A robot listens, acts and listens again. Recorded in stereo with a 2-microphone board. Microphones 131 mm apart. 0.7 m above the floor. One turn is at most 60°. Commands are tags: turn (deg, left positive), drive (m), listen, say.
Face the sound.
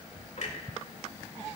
<turn deg="60"/>
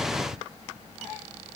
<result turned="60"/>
<listen/>
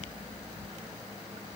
<say>I heard a clunk, but can't make it out now. It was about straight ahead or 60° left.</say>